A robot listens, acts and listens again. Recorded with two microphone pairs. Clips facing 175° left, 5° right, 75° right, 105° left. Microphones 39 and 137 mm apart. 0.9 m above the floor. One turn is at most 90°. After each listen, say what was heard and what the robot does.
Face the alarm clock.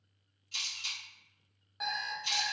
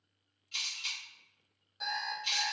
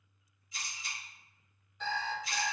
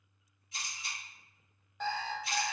The alarm clock: 120° left. Turn 90° left.
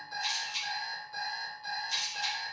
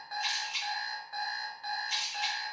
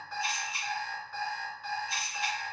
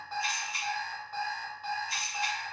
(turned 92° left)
The alarm clock is now 30° left. Turn 30° left.
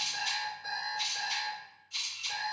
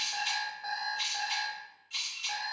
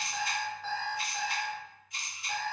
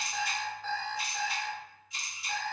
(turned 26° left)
Found it: an alarm clock, straight ahead, 1 to 2 m away.